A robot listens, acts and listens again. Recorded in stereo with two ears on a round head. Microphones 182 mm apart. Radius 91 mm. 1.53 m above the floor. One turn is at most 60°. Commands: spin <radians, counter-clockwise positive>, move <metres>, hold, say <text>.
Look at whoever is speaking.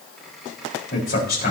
spin 0.79
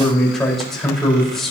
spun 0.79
say Facing the man speaking, over 4 m away.